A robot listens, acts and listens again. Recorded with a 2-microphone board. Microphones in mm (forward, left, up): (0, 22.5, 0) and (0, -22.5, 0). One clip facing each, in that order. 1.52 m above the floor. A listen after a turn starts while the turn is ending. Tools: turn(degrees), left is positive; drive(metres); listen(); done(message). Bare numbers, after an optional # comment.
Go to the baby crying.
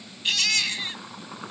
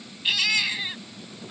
turn(-30)
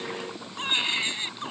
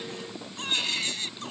# So it is at 20° left.
turn(20)
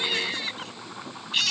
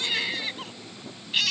drive(1.0)
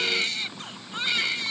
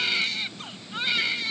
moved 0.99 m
drive(1.0)
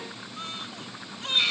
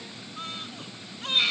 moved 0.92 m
drive(1.0)
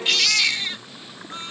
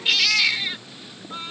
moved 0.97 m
# The baby crying is now 10° right.
turn(-10)
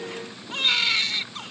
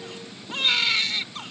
drive(1.0)
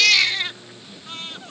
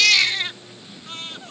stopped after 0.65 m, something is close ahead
done("I am next to the baby crying.")